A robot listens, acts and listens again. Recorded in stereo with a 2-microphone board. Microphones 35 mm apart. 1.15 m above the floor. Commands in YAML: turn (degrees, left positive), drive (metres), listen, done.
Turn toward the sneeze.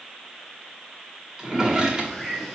listen: true
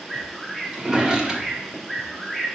listen: true
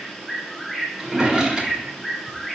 done: "I can't make out a sneeze, only a bird and a drawer."